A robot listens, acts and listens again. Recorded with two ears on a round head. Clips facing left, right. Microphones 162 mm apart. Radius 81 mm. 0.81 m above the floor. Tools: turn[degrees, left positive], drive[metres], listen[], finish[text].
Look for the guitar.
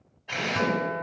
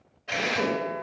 Thought: The guitar: about 65° left or 115° left.
Action: turn[65]
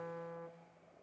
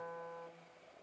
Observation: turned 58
Thought: So it is at 35° left.
Action: turn[35]
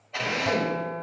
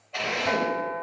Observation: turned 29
Action: finish[Found it: a guitar, straight ahead, 1 to 2 m away.]